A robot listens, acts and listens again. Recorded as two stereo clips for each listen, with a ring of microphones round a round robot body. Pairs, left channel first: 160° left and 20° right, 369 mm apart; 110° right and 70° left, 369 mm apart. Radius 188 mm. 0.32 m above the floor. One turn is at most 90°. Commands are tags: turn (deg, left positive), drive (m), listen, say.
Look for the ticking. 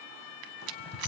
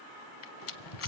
<turn deg="-90"/>
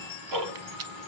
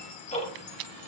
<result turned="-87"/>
<turn deg="-40"/>
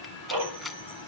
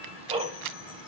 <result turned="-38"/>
<say>Found it: ticking, straight ahead, 2 to 4 m away.</say>